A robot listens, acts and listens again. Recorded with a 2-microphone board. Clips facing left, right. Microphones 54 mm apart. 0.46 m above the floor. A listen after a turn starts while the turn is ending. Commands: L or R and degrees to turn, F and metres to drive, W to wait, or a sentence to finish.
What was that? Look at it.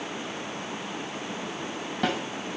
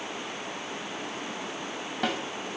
L30
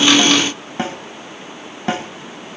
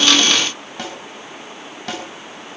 L150
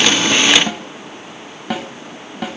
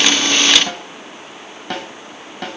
L10
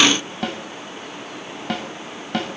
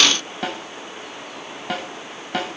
Facing the snare drum, 2 to 4 m away.